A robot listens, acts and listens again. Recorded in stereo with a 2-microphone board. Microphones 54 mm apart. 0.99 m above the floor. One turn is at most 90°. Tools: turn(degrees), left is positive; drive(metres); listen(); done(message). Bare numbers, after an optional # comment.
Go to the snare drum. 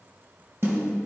# The snare drum: about 55° right or 125° right.
turn(-55)
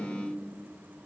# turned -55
listen()
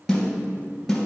drive(1.0)
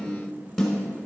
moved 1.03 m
drive(1.0)
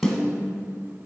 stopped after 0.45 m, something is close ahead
done("I am next to the snare drum.")